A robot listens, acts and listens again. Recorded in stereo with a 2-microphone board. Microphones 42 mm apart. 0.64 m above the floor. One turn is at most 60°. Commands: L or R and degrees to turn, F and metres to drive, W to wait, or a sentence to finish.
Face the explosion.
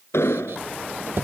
L60
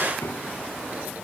L30
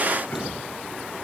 Facing where the explosion came from. I can't hear it now.